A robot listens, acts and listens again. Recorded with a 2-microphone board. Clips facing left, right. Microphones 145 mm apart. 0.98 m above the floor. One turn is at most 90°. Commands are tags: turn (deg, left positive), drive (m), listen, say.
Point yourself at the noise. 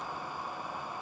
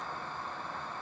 <listen/>
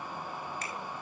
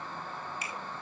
<turn deg="-30"/>
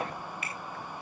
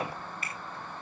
<turn deg="-90"/>
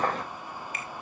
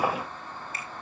<turn deg="-50"/>
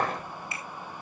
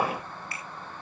<turn deg="20"/>
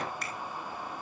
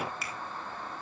<say>Facing the finger snap.</say>